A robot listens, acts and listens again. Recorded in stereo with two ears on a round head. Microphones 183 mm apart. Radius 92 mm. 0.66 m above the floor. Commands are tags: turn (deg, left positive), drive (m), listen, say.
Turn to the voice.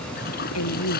<turn deg="90"/>
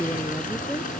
<say>Facing the woman speaking.</say>